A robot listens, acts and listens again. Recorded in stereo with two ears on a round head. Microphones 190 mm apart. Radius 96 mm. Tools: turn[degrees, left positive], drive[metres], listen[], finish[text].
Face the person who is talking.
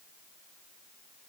Action: listen[]
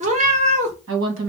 Thought: The woman speaking: about 75° right or 105° right.
Action: turn[-75]
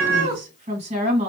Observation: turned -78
Thought: So it is at 30° right.
Action: turn[-30]
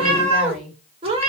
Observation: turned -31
Action: finish[Facing the woman speaking.]